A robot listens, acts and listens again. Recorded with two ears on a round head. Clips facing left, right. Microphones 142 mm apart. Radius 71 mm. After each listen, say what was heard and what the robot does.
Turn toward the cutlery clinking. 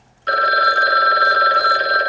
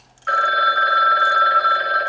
Keep listening.
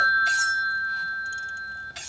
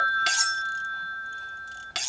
Turn 90° right.
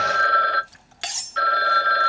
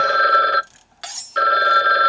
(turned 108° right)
So it is at 25° left. Turn 25° left.
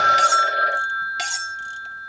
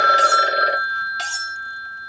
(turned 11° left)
The cutlery clinking is now 15° left. Turn 15° left.
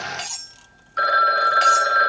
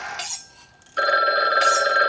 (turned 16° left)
Facing the cutlery clinking.